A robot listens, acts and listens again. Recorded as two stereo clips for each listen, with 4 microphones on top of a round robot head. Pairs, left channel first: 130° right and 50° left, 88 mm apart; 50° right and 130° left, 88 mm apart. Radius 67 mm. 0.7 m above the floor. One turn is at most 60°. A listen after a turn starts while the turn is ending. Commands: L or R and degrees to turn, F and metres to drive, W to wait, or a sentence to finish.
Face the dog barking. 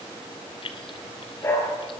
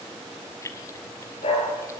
R60
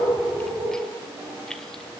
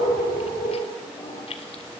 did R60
R10
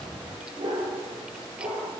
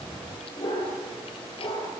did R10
Found it: a dog barking, straight ahead.